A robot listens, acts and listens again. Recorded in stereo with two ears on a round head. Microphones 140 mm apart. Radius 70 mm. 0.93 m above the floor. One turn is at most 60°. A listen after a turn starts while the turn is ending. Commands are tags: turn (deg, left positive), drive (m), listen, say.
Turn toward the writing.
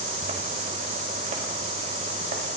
<listen/>
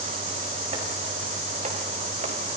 <listen/>
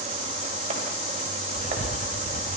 <turn deg="50"/>
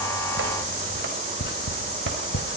<turn deg="60"/>
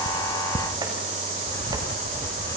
<turn deg="20"/>
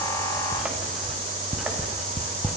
<say>Found it: writing, straight ahead, 2 to 4 m away.</say>